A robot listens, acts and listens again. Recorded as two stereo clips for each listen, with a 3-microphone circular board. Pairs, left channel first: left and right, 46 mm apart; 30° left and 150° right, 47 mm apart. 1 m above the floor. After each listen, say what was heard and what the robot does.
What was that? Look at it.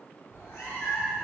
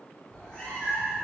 The cat meowing: 110° left. Turn 110° left.
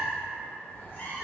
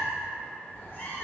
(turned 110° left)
The cat meowing is now 55° left. Turn 55° left.
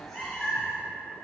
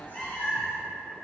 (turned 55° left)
The cat meowing is now 10° left. Turn 10° left.
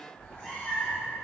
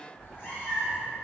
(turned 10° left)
The cat meowing is now 25° left. Turn 25° left.
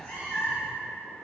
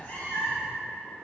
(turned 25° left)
The cat meowing is now 15° left. Turn 15° left.
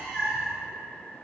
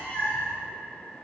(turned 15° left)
Facing the cat meowing, 1 to 2 m away.